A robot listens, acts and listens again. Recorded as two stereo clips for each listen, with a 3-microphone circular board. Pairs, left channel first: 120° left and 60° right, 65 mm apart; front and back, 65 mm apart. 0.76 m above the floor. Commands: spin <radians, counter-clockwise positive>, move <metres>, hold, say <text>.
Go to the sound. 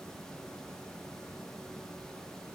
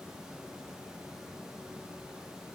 hold
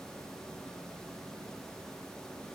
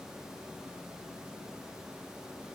hold
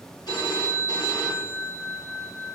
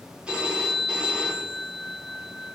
spin 1.83
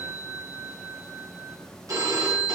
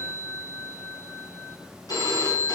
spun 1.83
spin -0.44
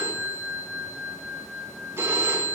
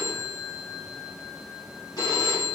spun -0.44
spin -0.17
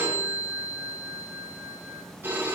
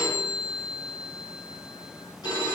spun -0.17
move 1.0
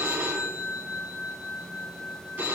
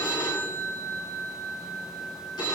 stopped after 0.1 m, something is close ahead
say Something is in my way. I am facing the phone ringing but have not reached it.